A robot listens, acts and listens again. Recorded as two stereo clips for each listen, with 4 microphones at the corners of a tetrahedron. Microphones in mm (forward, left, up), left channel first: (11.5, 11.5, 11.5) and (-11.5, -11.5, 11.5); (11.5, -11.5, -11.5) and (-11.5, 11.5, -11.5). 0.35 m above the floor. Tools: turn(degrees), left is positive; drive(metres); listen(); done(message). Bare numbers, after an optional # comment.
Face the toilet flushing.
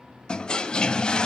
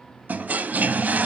# The toilet flushing: 110° left.
turn(110)
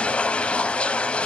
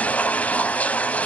done("Found it: a toilet flushing, straight ahead.")